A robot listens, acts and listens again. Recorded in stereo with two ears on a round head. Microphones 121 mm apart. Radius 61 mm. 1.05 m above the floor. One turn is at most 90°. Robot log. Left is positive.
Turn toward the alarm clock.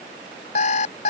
note: The alarm clock: about 55° left or 125° left.
cmd yaw +55
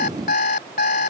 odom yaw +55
note: So it is at 70° left.
cmd yaw +70
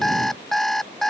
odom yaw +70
end: Facing the alarm clock.